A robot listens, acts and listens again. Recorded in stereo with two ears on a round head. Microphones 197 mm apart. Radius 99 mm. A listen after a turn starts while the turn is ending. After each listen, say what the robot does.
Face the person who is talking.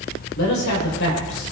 Turn 65° left.
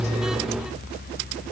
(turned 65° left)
Keep listening.
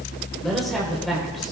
Facing the man speaking, 2 to 4 m away.